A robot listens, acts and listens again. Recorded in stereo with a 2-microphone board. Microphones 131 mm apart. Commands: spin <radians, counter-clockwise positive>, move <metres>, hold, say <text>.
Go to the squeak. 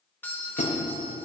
spin 1.05
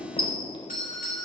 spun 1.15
spin 0.70
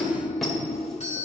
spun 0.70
move 1.0
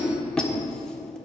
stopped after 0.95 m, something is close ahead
say Arrived at the squeak, straight ahead.